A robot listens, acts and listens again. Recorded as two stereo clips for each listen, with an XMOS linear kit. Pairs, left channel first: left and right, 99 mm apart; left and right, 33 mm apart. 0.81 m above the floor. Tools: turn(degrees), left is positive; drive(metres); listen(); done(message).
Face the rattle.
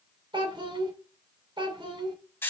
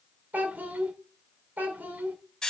listen()
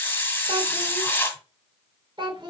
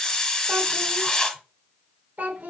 listen()
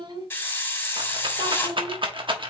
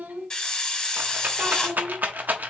turn(degrees=-60)
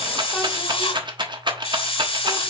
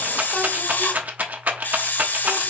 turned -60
turn(degrees=-55)
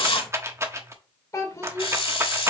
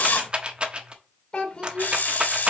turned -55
turn(degrees=-30)
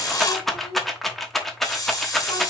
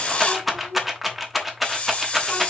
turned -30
done("Found it: a rattle, straight ahead, 1 to 2 m away.")